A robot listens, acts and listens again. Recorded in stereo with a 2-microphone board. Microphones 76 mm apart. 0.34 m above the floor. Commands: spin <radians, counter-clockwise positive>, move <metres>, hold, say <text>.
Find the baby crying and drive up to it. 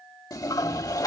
hold
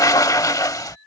hold
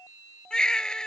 spin 0.52
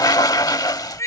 spin 2.44
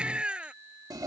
spin -0.26
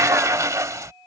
hold
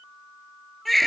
move 1.0
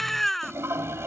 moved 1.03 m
move 1.0
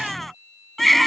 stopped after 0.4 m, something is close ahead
say I am next to the baby crying.